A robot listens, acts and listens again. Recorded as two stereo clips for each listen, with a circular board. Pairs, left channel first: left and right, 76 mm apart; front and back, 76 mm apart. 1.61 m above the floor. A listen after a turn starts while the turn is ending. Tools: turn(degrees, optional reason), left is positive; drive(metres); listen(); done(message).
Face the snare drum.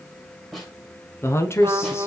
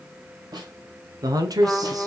turn(degrees=175, reason="The snare drum: 175° left.")
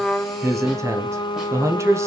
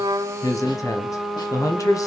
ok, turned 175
listen()
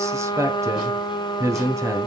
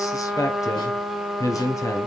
listen()
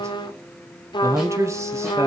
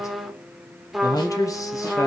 done("I heard a snare drum from this way, but can't make it out now.")